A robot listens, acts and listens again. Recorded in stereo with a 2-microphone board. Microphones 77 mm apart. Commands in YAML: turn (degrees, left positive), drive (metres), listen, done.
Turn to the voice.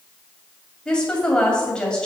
turn: 30
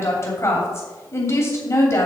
turn: 140
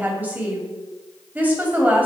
turn: -25
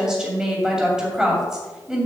turn: -10
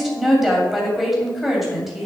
done: "Facing the woman speaking."